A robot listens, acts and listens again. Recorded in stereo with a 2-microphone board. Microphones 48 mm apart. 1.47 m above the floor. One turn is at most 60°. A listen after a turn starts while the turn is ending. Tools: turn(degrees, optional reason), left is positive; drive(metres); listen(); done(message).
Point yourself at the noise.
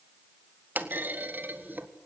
turn(degrees=-35, reason="The clunk: about 35° right or 145° right.")
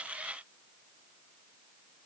listen()
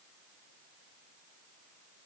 done("I heard a clunk, but can't make it out now. It was about straight ahead or 110° right.")